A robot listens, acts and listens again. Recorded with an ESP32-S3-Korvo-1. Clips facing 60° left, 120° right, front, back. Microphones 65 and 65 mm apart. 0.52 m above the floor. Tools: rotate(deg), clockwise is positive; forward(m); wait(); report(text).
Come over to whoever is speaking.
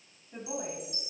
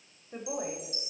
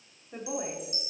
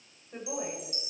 rotate(85)
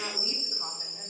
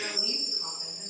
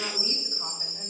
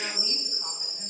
wait()
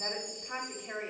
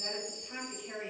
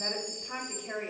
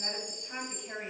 rotate(-15)
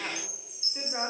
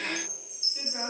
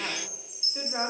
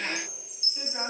forward(1.0)
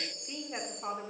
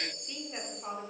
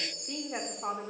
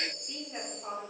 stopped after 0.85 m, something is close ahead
report("Arrived at the woman speaking, straight ahead.")